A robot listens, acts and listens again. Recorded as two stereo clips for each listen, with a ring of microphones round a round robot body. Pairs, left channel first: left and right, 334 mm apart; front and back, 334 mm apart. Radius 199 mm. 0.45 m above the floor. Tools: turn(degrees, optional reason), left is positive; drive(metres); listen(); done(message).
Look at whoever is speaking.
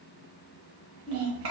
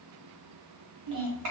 turn(degrees=-140, reason="The child speaking: 140° right.")
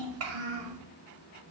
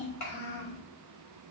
turn(degrees=-40, reason="The child speaking is now 40° right.")
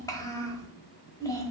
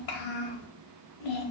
turn(degrees=10, reason="The child speaking is now 10° left.")
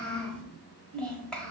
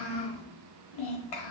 done("Found it: a child speaking, straight ahead, 1 to 2 m away.")